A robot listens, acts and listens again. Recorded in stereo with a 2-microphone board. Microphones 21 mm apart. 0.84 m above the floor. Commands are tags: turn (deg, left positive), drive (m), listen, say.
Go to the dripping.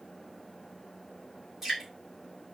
<turn deg="-20"/>
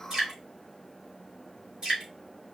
<turn deg="-140"/>
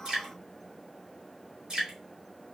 <turn deg="-40"/>
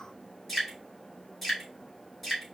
<drive m="1.0"/>
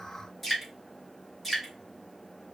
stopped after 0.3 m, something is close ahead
<say>Something is in my way. I am facing the dripping but have not reached it.</say>